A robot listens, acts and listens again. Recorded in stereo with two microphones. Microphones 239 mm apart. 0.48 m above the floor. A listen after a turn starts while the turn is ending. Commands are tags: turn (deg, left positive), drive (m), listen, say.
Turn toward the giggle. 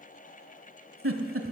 <turn deg="-60"/>
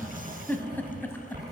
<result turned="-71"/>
<turn deg="10"/>
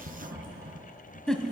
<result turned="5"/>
<say>Facing the giggle.</say>